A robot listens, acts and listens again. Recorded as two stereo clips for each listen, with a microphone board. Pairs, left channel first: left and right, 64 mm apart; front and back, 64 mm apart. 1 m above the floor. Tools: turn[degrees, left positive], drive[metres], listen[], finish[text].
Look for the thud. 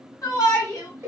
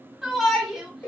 Action: listen[]
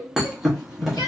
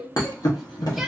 Action: finish[Facing the thud, under 1 m away.]